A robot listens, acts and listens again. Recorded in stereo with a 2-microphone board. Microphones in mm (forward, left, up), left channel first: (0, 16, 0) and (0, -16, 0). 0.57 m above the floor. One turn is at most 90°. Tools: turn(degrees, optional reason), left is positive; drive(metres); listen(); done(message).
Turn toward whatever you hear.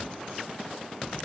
listen()
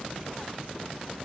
listen()
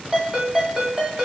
turn(degrees=-25, reason="The ringtone: about 25° right or 155° right.")
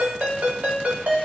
turn(degrees=-90, reason="So it is at 125° right.")
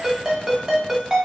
turn(degrees=-15, reason="The ringtone is now 15° right.")
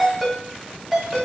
turn(degrees=-10, reason="The ringtone is now 10° right.")
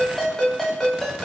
done("Found it: a ringtone, straight ahead.")